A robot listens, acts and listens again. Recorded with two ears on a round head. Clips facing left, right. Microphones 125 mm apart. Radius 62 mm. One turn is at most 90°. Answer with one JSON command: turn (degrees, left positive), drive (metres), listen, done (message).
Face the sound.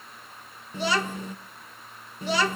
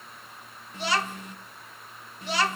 {"turn": 90}
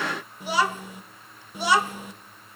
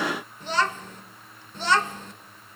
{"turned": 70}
{"turn": 10}
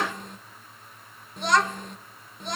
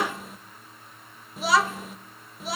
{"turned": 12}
{"done": "Found it: a child speaking, straight ahead."}